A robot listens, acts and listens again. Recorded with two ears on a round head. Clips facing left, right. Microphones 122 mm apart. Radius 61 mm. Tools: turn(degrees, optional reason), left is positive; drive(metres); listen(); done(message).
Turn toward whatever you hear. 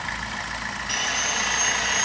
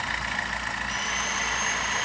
turn(degrees=70, reason="The sawing: about 70° left or 110° left.")
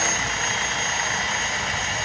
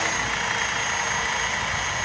turn(degrees=35, reason="So it is at 35° left.")
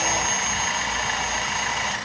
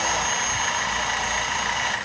turn(degrees=10, reason="The sawing is now 10° left.")
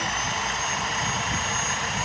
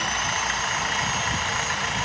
done("Facing the sawing.")